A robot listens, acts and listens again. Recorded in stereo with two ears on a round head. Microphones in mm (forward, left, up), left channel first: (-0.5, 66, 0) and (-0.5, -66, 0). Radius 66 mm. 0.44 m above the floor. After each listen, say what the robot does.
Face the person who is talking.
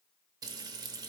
Keep listening.
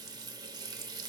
Keep listening.
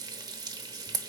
I can't make out anyone speaking, only frying.